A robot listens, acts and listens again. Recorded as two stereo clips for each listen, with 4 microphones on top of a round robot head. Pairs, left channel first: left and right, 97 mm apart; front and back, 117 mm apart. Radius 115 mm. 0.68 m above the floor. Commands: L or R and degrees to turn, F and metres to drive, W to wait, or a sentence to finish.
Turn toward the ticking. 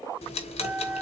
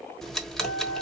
L90
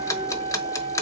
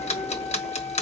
L35
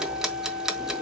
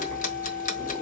Facing the ticking, 1 to 2 m away.